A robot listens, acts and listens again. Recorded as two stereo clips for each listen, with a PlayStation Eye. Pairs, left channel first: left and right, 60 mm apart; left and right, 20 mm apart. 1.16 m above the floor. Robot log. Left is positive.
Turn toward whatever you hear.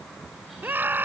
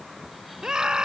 note: The scream: about 35° right or 145° right.
cmd yaw -35
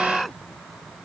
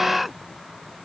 end: Found it: a scream, straight ahead.